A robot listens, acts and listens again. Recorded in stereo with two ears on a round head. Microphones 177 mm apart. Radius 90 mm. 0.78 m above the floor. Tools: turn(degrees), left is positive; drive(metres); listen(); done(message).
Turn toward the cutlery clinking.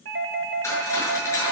turn(degrees=15)
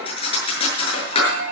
turn(degrees=150)
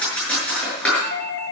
done("Found it: cutlery clinking, straight ahead, over 4 m away.")